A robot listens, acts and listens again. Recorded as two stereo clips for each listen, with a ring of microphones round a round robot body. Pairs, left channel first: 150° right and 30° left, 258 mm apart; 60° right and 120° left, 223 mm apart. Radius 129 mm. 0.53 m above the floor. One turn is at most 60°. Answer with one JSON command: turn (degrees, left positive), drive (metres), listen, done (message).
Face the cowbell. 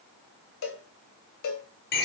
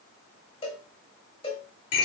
{"turn": -60}
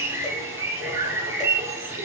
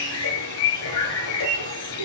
{"turn": -60}
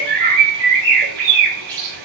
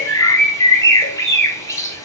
{"turn": -10}
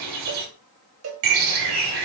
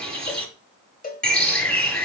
{"turn": -10}
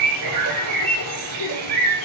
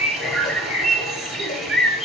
{"listen": true}
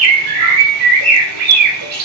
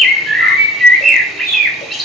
{"listen": true}
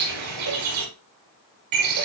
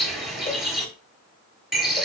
{"done": "I heard a cowbell from this way, but can't make it out now."}